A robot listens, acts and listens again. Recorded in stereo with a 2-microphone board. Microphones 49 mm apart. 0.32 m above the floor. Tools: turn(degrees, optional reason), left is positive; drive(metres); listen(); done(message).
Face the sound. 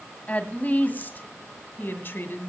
turn(degrees=50, reason="The woman speaking: about 50° left or 130° left.")
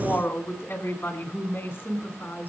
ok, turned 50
turn(degrees=50, reason="So it is at 50° left.")
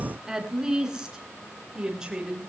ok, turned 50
turn(degrees=-15, reason="The woman speaking is now 15° right.")
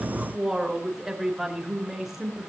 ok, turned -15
done("Found it: a woman speaking, straight ahead, over 4 m away.")